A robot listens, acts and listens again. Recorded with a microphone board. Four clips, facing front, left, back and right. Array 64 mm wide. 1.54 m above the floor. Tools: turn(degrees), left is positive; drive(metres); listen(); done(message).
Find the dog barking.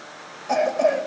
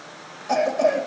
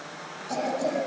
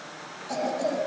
listen()
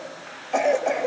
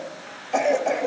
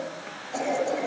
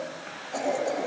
listen()
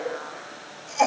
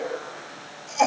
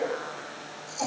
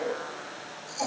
done("I can't make out a dog barking, only a cough.")